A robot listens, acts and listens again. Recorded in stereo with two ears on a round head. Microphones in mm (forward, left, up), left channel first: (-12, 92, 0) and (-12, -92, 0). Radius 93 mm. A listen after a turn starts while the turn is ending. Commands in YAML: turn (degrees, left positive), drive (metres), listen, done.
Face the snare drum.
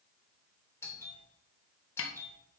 turn: 70
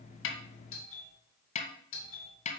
turn: 35
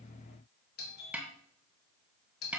done: "Found it: a snare drum, straight ahead."